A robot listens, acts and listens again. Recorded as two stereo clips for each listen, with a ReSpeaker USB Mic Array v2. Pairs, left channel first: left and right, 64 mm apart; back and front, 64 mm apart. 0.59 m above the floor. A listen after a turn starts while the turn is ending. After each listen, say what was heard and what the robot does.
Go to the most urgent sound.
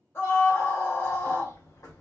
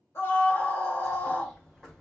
The scream: 140° left. Turn 140° left.
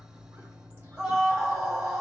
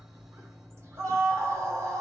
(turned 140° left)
Drive 1.0 m forward.
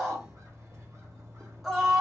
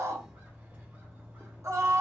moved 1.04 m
Drive 1.0 m forward.
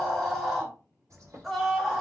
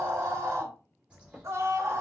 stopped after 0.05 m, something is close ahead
I am next to the scream.